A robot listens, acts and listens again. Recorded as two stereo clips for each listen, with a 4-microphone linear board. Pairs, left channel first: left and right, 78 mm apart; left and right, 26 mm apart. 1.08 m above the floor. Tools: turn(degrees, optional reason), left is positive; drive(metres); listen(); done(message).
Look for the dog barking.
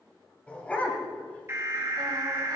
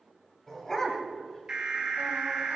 turn(degrees=20, reason="The dog barking: about 20° left or 160° left.")
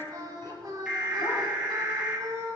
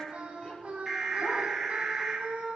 listen()
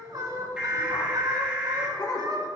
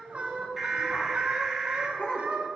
turn(degrees=125, reason="So it is at 125° left.")
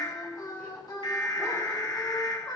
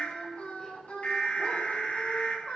listen()
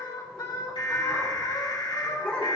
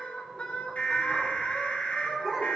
turn(degrees=10, reason="The dog barking is now 10° left.")
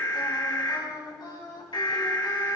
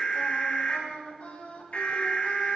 listen()
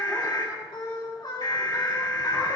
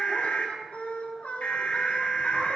listen()
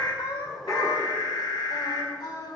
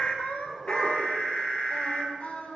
done("I heard a dog barking from this way, but can't make it out now.")